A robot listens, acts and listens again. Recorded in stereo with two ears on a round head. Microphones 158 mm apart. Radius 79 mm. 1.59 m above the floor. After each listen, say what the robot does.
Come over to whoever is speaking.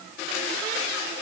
Keep listening.
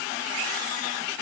Keep listening.
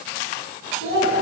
Turn 55° left.
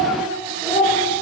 Drive 1.0 m forward.
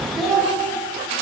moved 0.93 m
Drive 1.0 m forward.
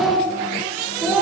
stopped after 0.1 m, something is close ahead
I am next to the child speaking.